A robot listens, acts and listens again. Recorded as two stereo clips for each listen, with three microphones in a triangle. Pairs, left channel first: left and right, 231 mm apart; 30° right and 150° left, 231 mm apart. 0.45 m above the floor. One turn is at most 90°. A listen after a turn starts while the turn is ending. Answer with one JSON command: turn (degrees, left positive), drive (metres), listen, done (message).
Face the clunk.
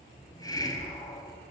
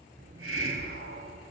{"listen": true}
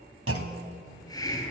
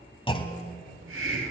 {"turn": -90}
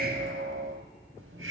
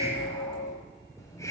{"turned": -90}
{"turn": -10}
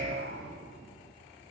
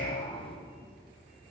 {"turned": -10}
{"done": "I heard a clunk from this way, but can't make it out now."}